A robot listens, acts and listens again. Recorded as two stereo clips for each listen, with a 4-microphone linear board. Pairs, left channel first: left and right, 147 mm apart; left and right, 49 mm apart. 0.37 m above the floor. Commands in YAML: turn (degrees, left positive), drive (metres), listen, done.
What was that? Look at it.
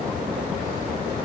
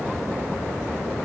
listen: true
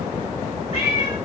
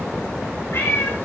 turn: 40
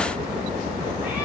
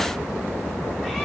listen: true
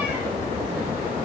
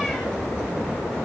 listen: true
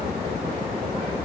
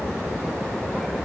done: "I heard a cat meowing, but can't make it out now. It was about straight ahead or 100° left."